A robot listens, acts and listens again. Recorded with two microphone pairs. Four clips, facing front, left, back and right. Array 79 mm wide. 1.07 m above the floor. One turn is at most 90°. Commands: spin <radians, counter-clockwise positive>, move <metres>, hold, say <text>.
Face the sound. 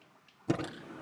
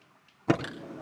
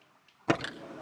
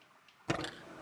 spin 1.57
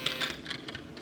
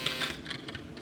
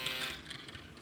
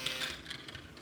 spin 0.61
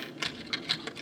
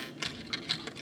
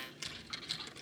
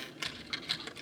spin 0.17
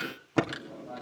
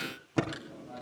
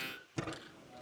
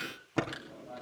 say Found it: typing on a keyboard, straight ahead, 2 to 4 m away.